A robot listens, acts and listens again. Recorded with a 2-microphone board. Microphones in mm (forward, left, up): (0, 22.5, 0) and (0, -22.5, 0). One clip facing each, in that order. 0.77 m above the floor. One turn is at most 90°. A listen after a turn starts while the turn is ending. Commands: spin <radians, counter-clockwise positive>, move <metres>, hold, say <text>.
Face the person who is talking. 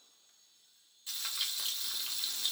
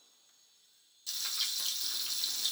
hold
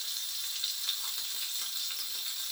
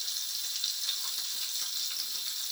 hold
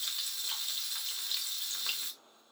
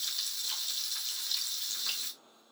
say I can't make out anyone speaking to turn to.